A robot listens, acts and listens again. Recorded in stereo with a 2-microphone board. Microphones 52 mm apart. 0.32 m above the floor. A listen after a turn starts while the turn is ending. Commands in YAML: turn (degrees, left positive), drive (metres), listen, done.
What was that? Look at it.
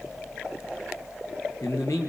turn: 90
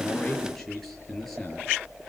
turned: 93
done: "Found it: a man speaking, straight ahead, over 4 m away."